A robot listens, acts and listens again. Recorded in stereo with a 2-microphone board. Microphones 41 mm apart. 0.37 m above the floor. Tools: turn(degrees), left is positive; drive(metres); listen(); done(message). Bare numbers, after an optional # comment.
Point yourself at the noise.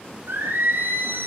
# The singing: about 60° right or 120° right.
turn(-60)
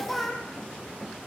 done("Found it: singing, straight ahead.")